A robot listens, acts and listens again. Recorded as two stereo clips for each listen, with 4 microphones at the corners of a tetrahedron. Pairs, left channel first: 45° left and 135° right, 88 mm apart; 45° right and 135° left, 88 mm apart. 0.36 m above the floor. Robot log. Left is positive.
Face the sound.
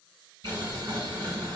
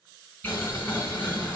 note: The boiling: 110° right.
cmd yaw -110
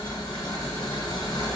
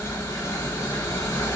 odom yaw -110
note: The boiling is now 10° left.
cmd yaw +10
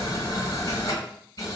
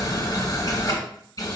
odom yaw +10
end: Facing the boiling, 1 to 2 m away.